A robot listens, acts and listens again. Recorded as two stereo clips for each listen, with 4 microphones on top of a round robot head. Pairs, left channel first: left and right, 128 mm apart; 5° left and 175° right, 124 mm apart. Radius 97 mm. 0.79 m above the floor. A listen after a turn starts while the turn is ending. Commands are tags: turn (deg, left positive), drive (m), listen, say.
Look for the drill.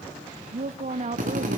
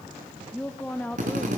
<turn deg="-130"/>
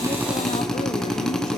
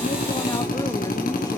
<say>Found it: a drill, straight ahead.</say>